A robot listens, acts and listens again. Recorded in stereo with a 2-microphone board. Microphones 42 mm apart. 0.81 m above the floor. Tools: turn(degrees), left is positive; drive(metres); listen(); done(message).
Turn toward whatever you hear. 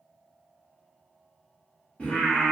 turn(degrees=25)
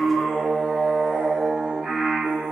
turn(degrees=-35)
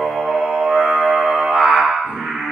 turn(degrees=-25)
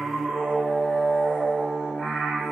done("Facing the singing, 1 to 2 m away.")